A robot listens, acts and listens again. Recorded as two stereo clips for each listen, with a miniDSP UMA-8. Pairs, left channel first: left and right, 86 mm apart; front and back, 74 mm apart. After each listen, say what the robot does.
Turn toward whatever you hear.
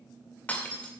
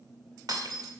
Turn 160° left.
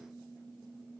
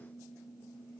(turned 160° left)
Facing where the breaking glass came from. I can't hear it now.